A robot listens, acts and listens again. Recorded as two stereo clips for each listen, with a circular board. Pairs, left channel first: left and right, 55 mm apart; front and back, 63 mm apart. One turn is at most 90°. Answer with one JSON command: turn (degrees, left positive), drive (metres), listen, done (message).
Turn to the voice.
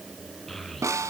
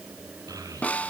{"turn": 90}
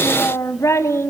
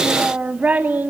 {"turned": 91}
{"turn": 90}
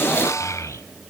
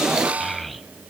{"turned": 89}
{"turn": 90}
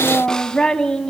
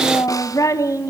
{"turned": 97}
{"turn": 15}
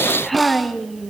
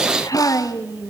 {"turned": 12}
{"done": "Facing the child speaking."}